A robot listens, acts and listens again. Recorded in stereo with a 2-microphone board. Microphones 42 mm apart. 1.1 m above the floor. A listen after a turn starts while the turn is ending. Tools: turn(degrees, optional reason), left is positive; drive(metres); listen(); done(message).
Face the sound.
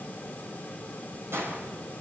turn(degrees=-90)
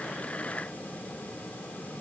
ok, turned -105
turn(degrees=15, reason="Nothing new. It was at 15° left.")
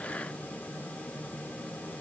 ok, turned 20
done("I heard a gunshot from this way, but can't make it out now.")